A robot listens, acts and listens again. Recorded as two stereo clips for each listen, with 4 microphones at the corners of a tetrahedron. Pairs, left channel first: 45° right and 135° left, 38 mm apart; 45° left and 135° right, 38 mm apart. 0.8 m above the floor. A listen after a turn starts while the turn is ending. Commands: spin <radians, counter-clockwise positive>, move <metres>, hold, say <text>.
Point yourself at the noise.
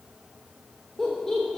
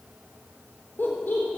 spin 0.52
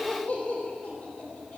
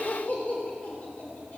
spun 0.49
say Found it: laughter, straight ahead, 2 to 4 m away.